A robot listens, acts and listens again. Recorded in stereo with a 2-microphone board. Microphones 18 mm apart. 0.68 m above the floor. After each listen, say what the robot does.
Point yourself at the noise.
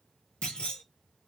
Turn 60° left.
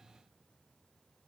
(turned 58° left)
Keep listening.
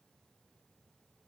I heard a clunk, but can't make it out now. It was about straight ahead or 65° left.